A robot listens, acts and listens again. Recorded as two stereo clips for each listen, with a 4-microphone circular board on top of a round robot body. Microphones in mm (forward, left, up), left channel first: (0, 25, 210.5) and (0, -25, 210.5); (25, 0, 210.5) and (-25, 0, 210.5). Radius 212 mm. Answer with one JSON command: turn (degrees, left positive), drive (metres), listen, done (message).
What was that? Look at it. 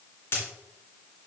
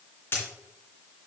{"turn": 50}
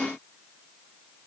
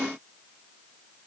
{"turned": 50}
{"done": "Facing where the dropped coin came from. I can't hear it now."}